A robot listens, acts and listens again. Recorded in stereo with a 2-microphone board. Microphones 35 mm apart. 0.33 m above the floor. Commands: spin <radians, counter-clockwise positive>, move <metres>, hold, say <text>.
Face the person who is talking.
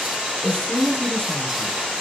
spin 0.44
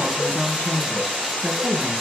spin 2.09
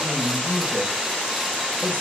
spin -0.61
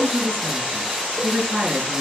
spin -0.26
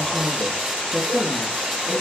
say Found it: a woman speaking, straight ahead, over 4 m away.